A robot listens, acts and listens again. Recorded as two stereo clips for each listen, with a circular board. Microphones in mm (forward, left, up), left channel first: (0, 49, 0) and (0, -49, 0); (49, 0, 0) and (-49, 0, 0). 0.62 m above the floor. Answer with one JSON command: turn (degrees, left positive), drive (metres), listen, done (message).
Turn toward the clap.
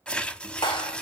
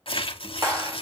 {"turn": 125}
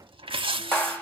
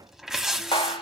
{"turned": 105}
{"turn": 20}
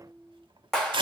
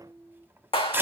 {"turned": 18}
{"done": "Facing the clap, 2 to 4 m away."}